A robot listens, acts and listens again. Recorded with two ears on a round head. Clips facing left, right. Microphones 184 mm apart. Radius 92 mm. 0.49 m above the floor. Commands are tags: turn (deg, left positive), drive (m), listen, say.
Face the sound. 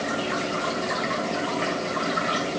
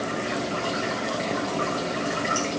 <listen/>
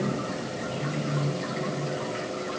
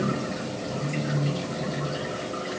<listen/>
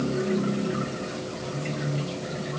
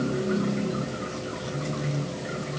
<say>I can't make out anything.</say>